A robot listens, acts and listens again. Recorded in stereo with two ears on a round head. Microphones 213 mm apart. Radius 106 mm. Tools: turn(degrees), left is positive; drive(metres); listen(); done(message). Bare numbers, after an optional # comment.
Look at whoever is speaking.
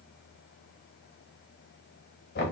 listen()
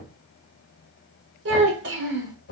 # The child speaking: about 50° right or 130° right.
turn(-50)
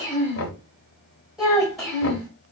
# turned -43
done("Found it: a child speaking, straight ahead, 2 to 4 m away.")